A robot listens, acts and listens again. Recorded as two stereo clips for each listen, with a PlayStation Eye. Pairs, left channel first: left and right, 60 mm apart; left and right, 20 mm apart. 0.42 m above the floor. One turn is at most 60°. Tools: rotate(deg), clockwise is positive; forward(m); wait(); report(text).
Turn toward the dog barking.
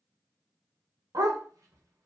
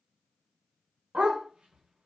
rotate(60)
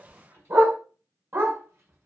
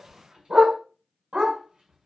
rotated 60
rotate(50)
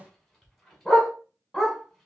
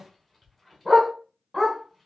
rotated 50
report("Found it: a dog barking, straight ahead.")